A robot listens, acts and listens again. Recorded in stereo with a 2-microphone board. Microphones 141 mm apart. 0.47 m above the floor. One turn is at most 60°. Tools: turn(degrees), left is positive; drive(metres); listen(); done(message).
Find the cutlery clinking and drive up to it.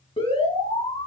listen()
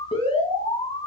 listen()
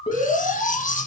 turn(degrees=60)
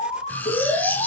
turn(degrees=10)
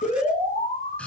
turn(degrees=10)
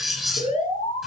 drive(metres=1.0)
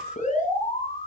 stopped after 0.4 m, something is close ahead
listen()
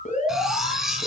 done("Something is in my way. I am facing the cutlery clinking but have not reached it.")